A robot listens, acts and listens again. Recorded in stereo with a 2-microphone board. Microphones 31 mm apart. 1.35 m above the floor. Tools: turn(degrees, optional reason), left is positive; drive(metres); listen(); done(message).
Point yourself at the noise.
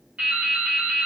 turn(degrees=-45, reason="The dripping: about 45° right or 135° right.")
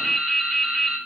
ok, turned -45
done("Found it: dripping, straight ahead, under 1 m away.")